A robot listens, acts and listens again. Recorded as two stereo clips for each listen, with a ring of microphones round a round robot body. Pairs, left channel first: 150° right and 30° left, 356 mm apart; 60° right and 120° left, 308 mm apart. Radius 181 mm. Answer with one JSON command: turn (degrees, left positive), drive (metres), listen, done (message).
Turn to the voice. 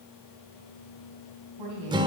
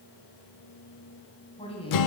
{"turn": 10}
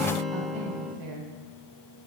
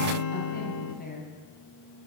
{"done": "Found it: a woman speaking, straight ahead, 2 to 4 m away."}